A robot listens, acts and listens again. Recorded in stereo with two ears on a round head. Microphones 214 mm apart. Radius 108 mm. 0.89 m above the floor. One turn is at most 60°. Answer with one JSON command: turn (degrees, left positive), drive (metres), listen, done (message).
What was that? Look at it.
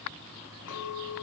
{"turn": 60}
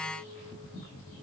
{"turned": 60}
{"listen": true}
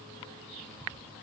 {"listen": true}
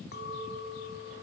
{"turn": 45}
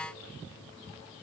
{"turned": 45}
{"listen": true}
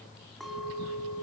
{"done": "Found it: a clink, straight ahead, 2 to 4 m away."}